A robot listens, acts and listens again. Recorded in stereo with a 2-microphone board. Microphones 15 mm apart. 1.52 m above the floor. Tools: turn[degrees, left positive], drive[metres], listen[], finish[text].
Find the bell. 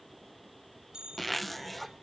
Thought: The bell: about 60° right or 120° right.
Action: turn[-60]
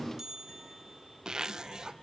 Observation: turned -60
Thought: So it is at 45° right.
Action: turn[-45]
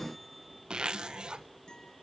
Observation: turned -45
Action: listen[]
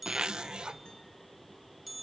Thought: The bell is now 10° right.
Action: turn[-10]
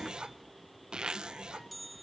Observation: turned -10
Action: finish[Found it: a bell, straight ahead, 1 to 2 m away.]